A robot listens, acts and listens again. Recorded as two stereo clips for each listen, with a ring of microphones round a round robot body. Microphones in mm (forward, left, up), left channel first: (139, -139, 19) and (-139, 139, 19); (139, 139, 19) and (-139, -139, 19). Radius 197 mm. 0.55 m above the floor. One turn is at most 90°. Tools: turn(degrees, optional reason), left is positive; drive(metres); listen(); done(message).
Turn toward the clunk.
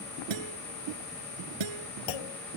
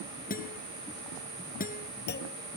turn(degrees=-20, reason="The clunk: 20° right.")
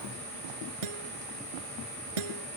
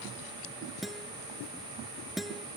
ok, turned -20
done("Facing where the clunk came from. I can't hear it now.")